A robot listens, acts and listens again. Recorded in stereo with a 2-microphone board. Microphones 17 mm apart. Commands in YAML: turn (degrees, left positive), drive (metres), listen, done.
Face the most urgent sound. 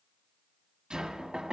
listen: true
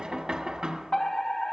turn: 45
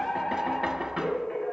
turn: 80
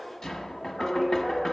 done: "Facing the fire alarm, 2 to 4 m away."